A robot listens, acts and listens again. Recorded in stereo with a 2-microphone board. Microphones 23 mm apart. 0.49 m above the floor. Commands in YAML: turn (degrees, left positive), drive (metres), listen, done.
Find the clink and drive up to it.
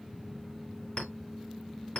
turn: 65
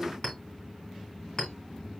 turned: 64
turn: 50
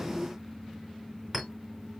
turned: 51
drive: 1.0
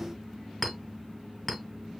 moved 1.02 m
drive: 1.0
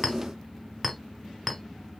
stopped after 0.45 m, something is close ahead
done: "Arrived at the clink, straight ahead."